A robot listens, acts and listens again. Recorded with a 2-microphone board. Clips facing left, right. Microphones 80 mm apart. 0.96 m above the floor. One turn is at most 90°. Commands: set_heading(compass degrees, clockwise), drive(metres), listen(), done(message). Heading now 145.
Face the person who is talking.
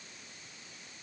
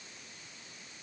listen()
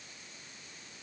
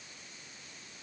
listen()
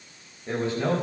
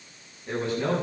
set_heading(115)
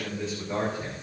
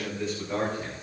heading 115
done("Facing the man speaking.")